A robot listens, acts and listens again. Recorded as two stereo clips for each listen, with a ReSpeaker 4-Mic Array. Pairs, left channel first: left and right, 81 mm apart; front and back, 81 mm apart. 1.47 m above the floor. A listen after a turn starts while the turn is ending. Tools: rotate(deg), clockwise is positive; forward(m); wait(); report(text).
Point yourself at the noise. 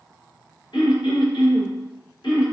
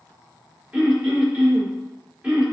rotate(-110)
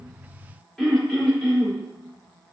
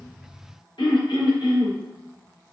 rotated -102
report("Found it: throat clearing, straight ahead.")